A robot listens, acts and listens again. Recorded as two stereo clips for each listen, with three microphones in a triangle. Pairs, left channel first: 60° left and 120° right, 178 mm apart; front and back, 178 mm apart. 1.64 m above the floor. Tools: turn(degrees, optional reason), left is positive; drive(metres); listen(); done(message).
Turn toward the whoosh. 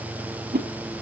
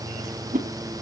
turn(degrees=-145, reason="The whoosh: 145° right.")
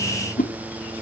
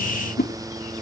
turn(degrees=25, reason="The whoosh is now 25° left.")
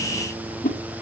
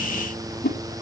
turn(degrees=20, reason="The whoosh is now 20° left.")
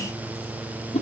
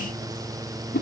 turn(degrees=10, reason="The whoosh is now 10° left.")
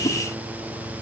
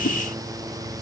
listen()
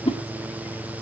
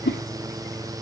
done("Found it: a whoosh, straight ahead, 2 to 4 m away.")